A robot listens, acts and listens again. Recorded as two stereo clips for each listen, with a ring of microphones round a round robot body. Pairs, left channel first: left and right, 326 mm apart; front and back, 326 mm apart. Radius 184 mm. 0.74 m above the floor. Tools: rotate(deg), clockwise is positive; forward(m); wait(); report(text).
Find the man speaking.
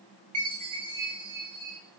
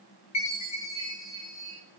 wait()
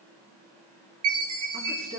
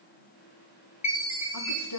rotate(20)
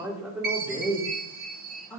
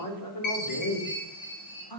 rotate(-10)
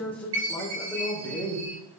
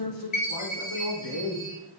report("Facing the man speaking, 2 to 4 m away.")